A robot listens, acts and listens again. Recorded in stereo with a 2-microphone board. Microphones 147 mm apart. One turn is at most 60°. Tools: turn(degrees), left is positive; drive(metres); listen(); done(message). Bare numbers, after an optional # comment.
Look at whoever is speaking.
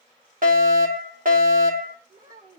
# The child speaking: about 70° right or 110° right.
turn(-60)
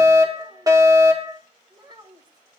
# So it is at 30° right.
turn(-30)
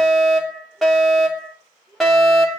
done("Found it: a child speaking, straight ahead.")